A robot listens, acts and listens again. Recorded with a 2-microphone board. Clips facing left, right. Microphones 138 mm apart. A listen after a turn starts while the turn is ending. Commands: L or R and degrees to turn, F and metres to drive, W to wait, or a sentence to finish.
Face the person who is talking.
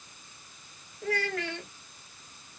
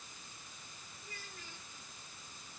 L90
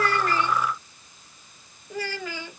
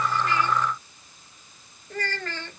L10
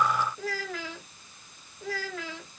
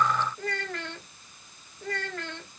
Facing the child speaking.